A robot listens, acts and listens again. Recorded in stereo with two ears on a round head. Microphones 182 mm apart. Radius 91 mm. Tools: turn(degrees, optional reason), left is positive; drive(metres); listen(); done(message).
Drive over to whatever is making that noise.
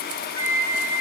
turn(degrees=30)
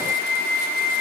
turn(degrees=-15, reason="So it is at 15° right.")
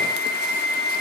drive(metres=1.0)
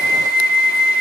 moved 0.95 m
drive(metres=1.0)
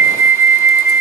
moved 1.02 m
turn(degrees=-15, reason="The flute is now 15° right.")
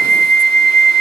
drive(metres=1.0)
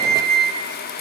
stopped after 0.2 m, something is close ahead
done("I am next to the flute.")